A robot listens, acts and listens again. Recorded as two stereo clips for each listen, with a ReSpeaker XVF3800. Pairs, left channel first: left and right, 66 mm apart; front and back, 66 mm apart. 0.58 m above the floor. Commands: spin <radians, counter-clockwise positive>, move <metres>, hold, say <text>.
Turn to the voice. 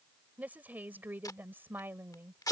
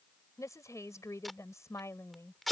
spin -0.70
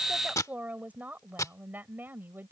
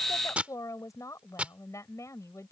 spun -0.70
spin -0.61
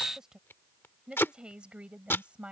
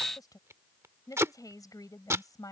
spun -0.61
spin -0.35
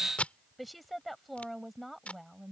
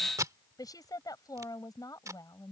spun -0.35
say Facing the woman speaking.